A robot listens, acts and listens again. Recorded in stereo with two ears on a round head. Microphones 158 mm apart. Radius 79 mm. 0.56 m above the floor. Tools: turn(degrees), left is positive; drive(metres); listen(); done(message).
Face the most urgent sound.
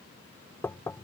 listen()
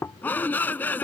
turn(degrees=30)
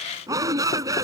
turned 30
turn(degrees=-20)
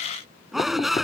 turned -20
done("Facing the shout.")